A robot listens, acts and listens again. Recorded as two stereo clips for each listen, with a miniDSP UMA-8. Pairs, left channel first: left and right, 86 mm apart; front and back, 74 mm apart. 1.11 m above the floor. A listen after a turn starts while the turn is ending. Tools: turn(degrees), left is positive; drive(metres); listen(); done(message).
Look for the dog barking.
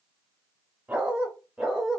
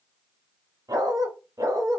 turn(degrees=-175)
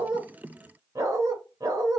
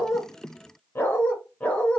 turn(degrees=-70)
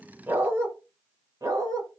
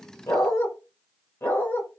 turn(degrees=-55)
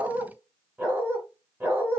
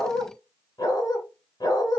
turn(degrees=-20)
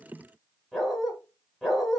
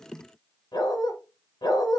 done("Facing the dog barking.")